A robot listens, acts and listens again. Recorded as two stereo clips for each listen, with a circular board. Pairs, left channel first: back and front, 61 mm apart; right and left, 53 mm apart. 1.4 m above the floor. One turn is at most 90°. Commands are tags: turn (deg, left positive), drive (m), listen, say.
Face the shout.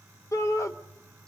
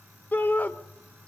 <turn deg="-90"/>
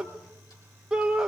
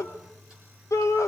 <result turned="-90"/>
<turn deg="-80"/>
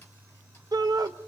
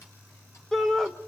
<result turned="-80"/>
<turn deg="-10"/>
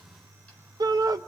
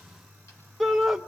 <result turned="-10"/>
<say>Found it: a shout, straight ahead, under 1 m away.</say>